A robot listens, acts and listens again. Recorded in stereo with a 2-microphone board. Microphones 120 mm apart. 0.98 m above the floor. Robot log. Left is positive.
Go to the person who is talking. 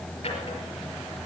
cmd idle
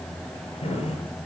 cmd idle
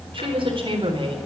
note: The woman speaking: about 45° right or 135° right.
cmd yaw -45
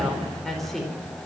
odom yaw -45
cmd fwd 1.0
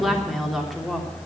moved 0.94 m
cmd fwd 1.0
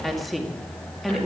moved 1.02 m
cmd fwd 1.0
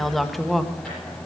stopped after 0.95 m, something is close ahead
end: I am next to the woman speaking.